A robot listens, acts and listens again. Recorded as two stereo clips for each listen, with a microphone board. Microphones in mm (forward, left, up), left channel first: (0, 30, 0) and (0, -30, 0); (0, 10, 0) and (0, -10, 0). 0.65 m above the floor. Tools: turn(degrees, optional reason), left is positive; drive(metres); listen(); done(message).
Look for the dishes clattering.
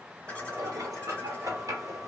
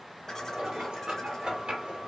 turn(degrees=-90)
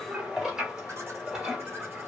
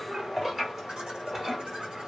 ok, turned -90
turn(degrees=-15, reason="So it is at 15° right.")
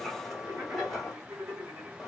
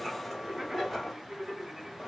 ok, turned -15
done("Found it: dishes clattering, straight ahead, 1 to 2 m away.")